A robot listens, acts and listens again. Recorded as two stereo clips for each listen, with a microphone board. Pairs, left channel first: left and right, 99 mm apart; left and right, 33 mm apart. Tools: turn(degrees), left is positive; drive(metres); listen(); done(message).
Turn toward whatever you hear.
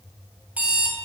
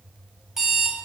turn(degrees=-15)
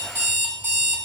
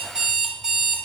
turn(degrees=-150)
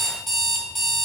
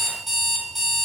done("Found it: an alarm clock, straight ahead.")